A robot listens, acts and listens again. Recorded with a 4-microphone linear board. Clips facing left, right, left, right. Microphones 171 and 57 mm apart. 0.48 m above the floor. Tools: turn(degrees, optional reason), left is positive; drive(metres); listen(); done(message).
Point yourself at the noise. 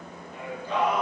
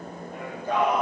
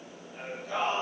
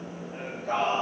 turn(degrees=-50, reason="The singing: about 50° right or 130° right.")
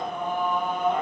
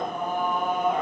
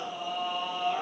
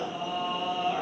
turn(degrees=-10, reason="So it is at 10° right.")
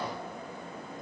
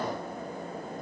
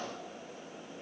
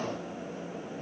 listen()
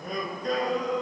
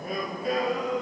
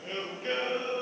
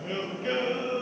turn(degrees=-10, reason="The singing is now 10° right.")
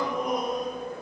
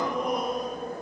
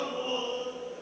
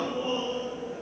done("Facing the singing.")